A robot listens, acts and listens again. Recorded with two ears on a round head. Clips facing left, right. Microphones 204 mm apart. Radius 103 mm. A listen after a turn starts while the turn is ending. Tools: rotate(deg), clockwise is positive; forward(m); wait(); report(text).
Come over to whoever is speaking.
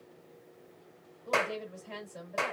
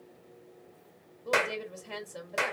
rotate(55)
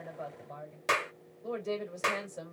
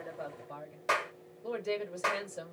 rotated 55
rotate(15)
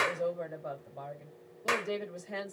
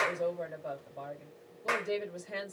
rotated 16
forward(1.0)
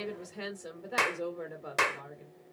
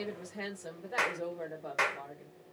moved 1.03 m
rotate(-10)
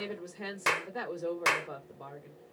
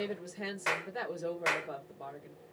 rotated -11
forward(1.0)
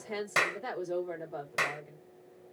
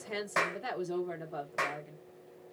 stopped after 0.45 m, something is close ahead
rotate(10)
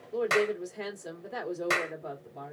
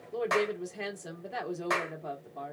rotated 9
report("Arrived at the woman speaking, straight ahead.")